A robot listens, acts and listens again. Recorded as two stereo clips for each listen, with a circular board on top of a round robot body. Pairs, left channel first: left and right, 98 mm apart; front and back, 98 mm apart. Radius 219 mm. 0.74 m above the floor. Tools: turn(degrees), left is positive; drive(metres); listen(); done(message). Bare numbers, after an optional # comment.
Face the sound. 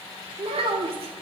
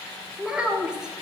# The child speaking: 100° right.
turn(-100)
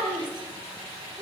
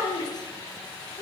# The child speaking is now 45° right.
turn(-45)
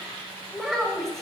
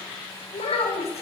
done("Facing the child speaking.")